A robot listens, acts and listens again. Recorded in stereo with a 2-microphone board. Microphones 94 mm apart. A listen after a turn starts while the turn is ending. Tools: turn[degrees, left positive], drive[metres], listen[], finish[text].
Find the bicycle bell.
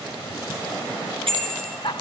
Action: turn[-90]
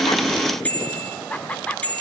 Thought: So it is at 15° left.
Action: turn[15]
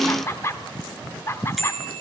Action: finish[Facing the bicycle bell, over 4 m away.]